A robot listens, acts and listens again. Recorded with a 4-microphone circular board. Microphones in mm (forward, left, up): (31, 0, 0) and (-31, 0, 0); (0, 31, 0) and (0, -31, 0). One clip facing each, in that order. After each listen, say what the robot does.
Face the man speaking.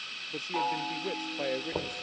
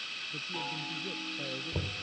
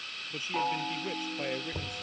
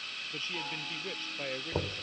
Turn 10° left.
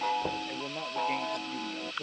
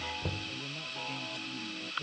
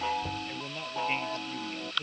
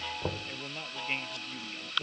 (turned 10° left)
Found it: a man speaking, straight ahead.